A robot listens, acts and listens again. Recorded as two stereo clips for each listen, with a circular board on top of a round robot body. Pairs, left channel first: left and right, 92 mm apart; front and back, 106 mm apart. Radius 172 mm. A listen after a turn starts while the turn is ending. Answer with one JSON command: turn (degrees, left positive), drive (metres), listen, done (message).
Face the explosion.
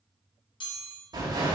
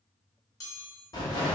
{"turn": -45}
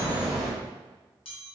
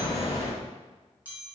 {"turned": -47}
{"done": "Facing the explosion, 1 to 2 m away."}